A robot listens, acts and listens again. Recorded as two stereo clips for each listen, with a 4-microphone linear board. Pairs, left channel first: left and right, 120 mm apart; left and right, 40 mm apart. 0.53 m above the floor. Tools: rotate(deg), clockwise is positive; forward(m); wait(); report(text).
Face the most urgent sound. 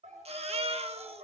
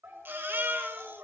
rotate(55)
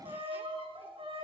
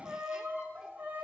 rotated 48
wait()
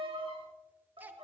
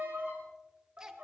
wait()
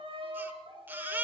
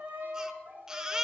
rotate(15)
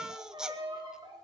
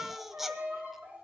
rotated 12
report("Found it: a baby crying, straight ahead, under 1 m away.")